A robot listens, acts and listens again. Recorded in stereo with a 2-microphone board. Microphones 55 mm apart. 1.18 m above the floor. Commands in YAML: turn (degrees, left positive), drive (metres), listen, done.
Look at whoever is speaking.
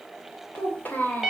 turn: 35
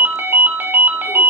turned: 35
listen: true
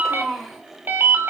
done: "Found it: a child speaking, straight ahead, 2 to 4 m away."